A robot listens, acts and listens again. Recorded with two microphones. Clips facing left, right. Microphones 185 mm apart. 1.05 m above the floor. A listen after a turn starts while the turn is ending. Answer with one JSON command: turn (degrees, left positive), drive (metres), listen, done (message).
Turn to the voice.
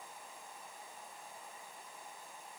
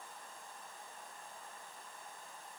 {"listen": true}
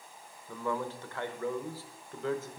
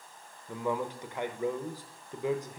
{"turn": -15}
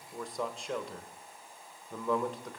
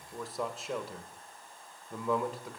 {"done": "Found it: a man speaking, straight ahead, 1 to 2 m away."}